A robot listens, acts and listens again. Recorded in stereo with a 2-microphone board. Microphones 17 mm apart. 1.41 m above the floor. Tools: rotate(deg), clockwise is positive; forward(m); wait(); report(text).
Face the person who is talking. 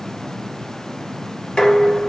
wait()
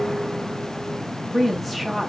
rotate(-30)
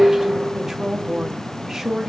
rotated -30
rotate(20)
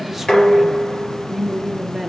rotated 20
report("Found it: a woman speaking, straight ahead.")